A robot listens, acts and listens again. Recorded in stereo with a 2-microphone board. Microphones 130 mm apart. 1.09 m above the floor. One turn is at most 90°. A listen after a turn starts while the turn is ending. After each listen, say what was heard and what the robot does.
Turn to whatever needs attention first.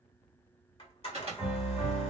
The alarm: about 50° right or 130° right. Turn 50° right.
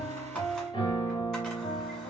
Keep listening.
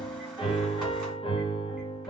Keep listening.
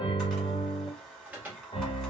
So it is at 15° right. Turn 15° right.
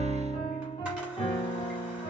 Keep listening.
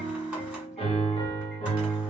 Keep listening.
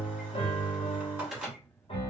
Facing the alarm.